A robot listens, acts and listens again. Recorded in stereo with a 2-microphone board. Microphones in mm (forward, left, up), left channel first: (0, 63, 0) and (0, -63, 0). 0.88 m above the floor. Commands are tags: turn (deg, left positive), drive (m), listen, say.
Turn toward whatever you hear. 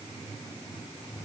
<listen/>
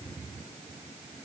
<listen/>
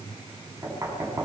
<turn deg="-25"/>
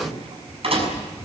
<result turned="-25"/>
<turn deg="-125"/>
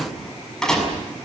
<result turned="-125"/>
<say>Facing the knocking.</say>